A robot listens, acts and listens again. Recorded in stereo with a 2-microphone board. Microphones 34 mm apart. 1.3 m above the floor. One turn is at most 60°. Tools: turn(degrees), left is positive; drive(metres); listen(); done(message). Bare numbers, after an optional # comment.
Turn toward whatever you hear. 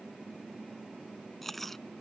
turn(30)
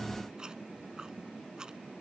# So it is at 25° right.
turn(-25)
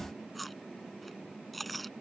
done("Found it: chewing, straight ahead.")